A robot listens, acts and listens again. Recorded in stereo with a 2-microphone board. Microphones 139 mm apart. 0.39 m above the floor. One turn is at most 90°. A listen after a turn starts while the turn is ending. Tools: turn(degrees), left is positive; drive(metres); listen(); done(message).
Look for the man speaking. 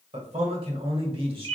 turn(degrees=-40)
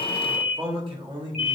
turn(degrees=-35)
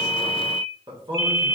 turn(degrees=-35)
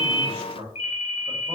turn(degrees=-45)
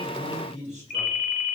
turn(degrees=-55)
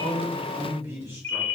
turn(degrees=-20)
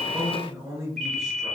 done("Facing the man speaking.")